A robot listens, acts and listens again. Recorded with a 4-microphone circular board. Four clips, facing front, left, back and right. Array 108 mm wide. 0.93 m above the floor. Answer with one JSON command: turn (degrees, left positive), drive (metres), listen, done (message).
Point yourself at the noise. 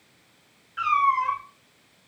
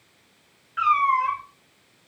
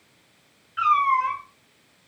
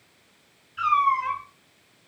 {"turn": 95}
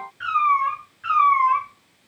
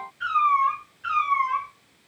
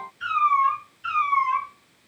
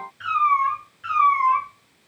{"turn": -15}
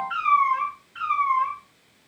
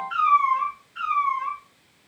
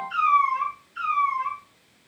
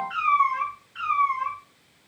{"done": "Facing the cat meowing, 2 to 4 m away."}